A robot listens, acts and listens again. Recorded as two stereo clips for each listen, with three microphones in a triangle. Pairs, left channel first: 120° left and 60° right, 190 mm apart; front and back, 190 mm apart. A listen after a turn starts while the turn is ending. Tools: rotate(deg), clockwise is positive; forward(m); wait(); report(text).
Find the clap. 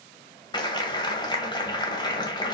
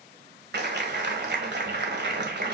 rotate(175)
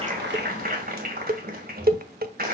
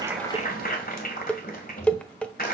rotate(30)
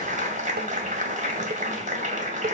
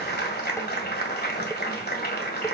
rotate(20)
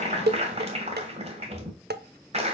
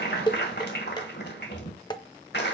rotate(10)
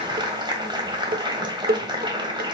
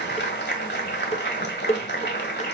report("Found it: a clap, straight ahead, 1 to 2 m away.")